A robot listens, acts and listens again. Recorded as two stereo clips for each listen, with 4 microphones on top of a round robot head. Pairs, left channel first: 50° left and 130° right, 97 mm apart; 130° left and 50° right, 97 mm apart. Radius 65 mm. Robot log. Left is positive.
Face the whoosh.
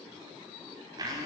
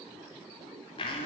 cmd idle
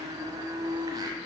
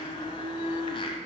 cmd idle
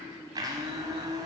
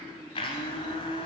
end: I can't make out a whoosh to turn to.